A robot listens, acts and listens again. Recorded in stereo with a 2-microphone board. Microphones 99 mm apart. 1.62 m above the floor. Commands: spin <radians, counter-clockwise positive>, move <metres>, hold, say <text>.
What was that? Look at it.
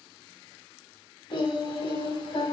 spin 0.96
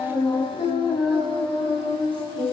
spin 0.96
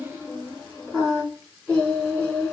say Found it: singing, straight ahead, over 4 m away.